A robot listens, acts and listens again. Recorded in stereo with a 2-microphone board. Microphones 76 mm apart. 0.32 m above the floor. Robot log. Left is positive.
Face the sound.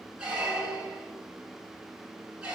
cmd yaw -30
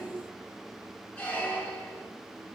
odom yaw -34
note: So it is at 20° left.
cmd yaw +20
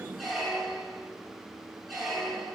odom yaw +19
end: Facing the squeak, 1 to 2 m away.